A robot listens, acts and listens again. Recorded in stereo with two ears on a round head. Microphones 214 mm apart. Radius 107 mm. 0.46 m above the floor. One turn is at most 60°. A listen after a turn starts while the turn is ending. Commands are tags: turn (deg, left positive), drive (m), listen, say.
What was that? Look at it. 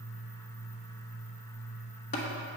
<turn deg="30"/>
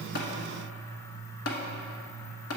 <turn deg="60"/>
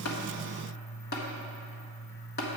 <turn deg="45"/>
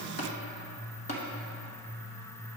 <turn deg="30"/>
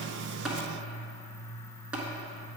<say>Facing the tapping.</say>